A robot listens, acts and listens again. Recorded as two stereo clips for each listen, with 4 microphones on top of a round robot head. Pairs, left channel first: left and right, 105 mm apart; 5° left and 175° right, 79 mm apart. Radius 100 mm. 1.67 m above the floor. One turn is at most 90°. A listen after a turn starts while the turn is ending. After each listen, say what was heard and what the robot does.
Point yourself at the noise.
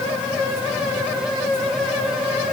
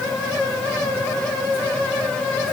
Keep listening.
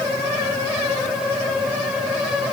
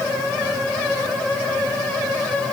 Keep listening.
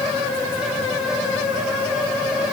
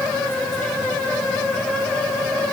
I can't make out anything.